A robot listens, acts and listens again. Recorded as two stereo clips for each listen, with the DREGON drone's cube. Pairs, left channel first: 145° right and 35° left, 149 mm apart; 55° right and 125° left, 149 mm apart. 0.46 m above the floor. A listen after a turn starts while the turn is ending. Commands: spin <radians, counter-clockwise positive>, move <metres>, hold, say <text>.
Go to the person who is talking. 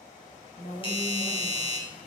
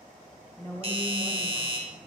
spin -2.18
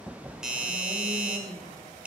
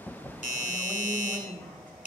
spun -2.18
spin 0.35
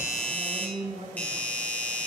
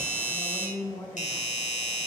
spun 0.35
move 1.0
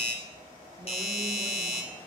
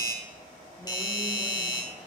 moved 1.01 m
hold
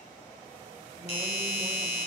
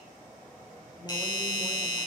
hold
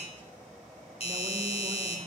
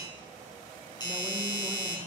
say I heard a woman speaking from this way, but can't make it out now. I did not reach it.